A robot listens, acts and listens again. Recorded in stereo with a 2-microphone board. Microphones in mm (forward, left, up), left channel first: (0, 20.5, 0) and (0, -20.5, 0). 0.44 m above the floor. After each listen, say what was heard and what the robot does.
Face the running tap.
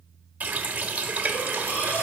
The running tap: about 40° right or 140° right. Turn 40° right.
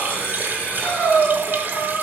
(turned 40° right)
So it is at 90° right. Turn 90° right.
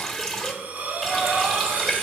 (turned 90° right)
Facing the running tap, under 1 m away.